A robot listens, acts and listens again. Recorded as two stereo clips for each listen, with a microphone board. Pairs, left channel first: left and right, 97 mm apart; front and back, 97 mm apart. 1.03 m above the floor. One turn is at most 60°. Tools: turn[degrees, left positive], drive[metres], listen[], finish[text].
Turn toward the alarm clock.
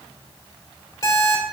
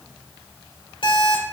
Thought: The alarm clock: 30° left.
Action: turn[30]
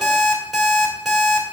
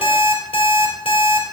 Action: finish[Facing the alarm clock, 2 to 4 m away.]